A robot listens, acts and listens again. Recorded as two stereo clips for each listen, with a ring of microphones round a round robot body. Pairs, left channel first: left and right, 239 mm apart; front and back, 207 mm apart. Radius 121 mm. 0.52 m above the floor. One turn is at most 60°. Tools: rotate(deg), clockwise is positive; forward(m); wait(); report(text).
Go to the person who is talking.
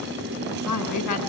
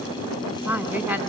rotate(-60)
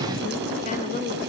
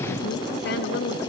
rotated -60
rotate(-40)
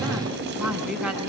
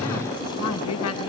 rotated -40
forward(1.0)
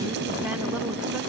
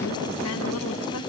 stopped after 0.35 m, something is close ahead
wait()
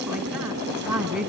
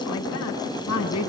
report("Something is in my way. I am facing the woman speaking but have not reached it.")